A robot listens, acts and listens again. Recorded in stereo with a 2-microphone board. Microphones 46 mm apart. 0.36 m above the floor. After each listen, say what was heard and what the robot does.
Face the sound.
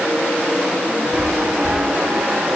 The chime: about 35° right or 145° right. Turn 35° right.
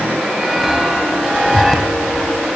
Facing the chime, 1 to 2 m away.